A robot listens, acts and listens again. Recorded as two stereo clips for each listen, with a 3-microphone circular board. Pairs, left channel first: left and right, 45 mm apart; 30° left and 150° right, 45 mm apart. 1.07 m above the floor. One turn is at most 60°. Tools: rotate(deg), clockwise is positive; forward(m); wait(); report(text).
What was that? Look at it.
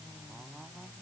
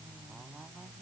wait()
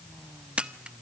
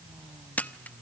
rotate(25)
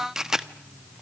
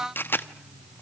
rotate(10)
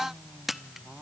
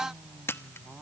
report("Facing the camera shutter.")